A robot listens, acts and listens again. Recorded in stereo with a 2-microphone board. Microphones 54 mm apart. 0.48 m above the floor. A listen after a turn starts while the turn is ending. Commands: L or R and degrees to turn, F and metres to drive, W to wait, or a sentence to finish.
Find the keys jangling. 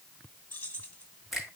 L25
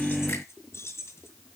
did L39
L130
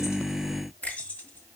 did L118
L30
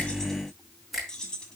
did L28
L15
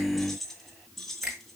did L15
Facing the keys jangling.